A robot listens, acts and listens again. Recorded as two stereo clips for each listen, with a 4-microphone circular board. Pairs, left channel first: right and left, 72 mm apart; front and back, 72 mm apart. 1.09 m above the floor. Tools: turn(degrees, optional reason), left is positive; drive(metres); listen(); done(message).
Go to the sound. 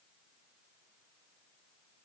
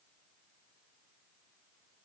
listen()
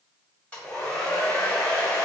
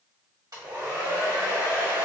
turn(degrees=-155, reason="The hair dryer: 155° right.")
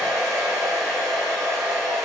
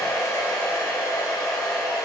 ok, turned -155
turn(degrees=-15, reason="The hair dryer is now 15° right.")
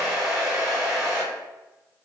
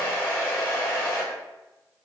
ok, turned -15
drive(metres=1.0)
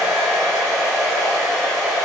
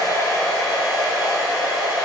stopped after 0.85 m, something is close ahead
done("I am next to the hair dryer.")